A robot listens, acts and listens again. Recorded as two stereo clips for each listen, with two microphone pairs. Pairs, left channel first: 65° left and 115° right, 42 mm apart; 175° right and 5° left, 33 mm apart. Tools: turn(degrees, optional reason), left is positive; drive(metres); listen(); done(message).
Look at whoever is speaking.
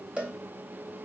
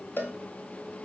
listen()
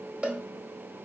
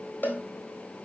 listen()
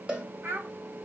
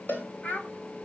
turn(degrees=-135, reason="The child speaking: 135° right.")
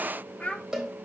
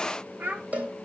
turn(degrees=10, reason="The child speaking is now 10° left.")
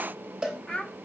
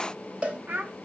done("Found it: a child speaking, straight ahead.")